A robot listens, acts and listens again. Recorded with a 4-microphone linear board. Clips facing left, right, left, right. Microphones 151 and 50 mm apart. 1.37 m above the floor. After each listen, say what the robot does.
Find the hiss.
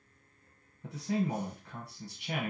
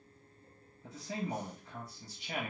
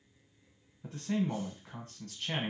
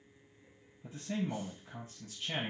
Keep listening.
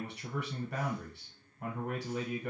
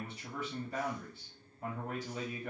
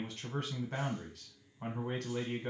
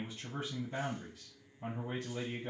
Keep listening.
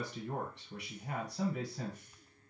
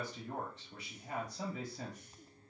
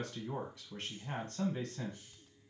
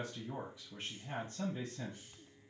I can't make out a hiss to turn to.